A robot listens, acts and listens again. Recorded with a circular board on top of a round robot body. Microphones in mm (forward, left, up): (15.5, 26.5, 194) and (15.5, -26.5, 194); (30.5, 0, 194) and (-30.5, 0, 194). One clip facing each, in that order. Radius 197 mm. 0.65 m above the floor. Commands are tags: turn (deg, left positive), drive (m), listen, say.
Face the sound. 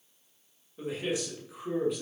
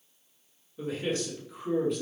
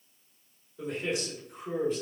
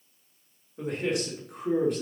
<turn deg="180"/>
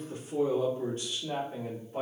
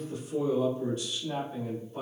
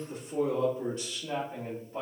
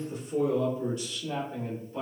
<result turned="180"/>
<turn deg="55"/>
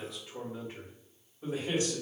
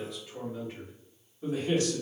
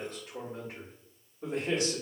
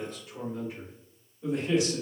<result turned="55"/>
<turn deg="15"/>
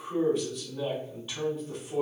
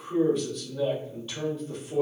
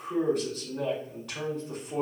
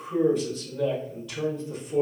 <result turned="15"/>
<say>Facing the man speaking.</say>